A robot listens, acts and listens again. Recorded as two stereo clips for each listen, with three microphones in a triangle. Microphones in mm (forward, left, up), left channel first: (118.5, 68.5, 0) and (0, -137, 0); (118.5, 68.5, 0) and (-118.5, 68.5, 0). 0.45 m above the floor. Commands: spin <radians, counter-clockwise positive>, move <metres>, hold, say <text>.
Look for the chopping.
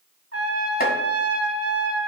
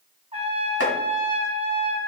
spin 0.17
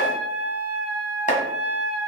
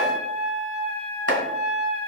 say Found it: chopping, straight ahead.